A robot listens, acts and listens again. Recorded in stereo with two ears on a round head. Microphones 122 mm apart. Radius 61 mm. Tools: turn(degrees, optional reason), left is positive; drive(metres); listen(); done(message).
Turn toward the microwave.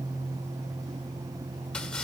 listen()
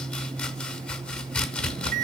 turn(degrees=-70, reason="The microwave: about 70° right or 110° right.")
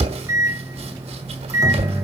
turn(degrees=-20, reason="So it is at 20° right.")
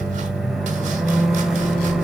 done("Found it: a microwave, straight ahead, 1 to 2 m away.")